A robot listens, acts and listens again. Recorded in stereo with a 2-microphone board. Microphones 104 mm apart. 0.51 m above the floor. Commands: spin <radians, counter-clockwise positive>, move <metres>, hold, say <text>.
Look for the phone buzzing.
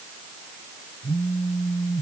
spin -0.52
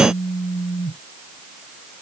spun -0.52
spin 0.35
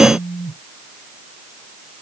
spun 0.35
say Found it: a phone buzzing, straight ahead.